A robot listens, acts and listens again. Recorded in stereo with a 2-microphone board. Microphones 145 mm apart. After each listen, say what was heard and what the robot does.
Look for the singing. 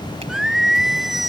Turn 30° left.
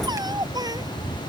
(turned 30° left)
So it is at 25° right. Turn 25° right.
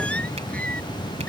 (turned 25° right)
The singing is now 10° left. Turn 10° left.
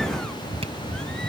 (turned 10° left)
Keep listening.
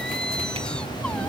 Facing the singing.